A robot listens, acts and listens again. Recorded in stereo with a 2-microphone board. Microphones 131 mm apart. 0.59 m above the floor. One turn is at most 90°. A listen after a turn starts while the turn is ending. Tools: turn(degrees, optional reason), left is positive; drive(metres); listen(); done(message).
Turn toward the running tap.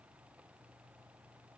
listen()
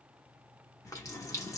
turn(degrees=25, reason="The running tap: about 25° left or 155° left.")
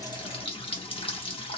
turn(degrees=90, reason="So it is at 125° left.")
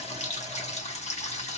turn(degrees=75, reason="The running tap is now 75° left.")
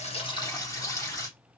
turn(degrees=30, reason="The running tap is now 30° left.")
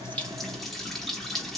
done("Facing the running tap.")